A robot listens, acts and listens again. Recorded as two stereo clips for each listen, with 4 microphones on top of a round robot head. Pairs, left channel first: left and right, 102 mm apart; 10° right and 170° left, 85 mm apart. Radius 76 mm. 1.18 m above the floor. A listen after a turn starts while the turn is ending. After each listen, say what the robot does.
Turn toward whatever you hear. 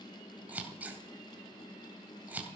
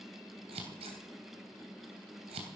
Turn 165° right.
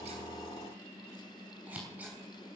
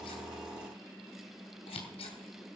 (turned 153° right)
Turn 10° right.
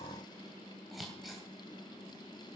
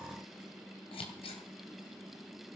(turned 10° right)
Facing the scissors.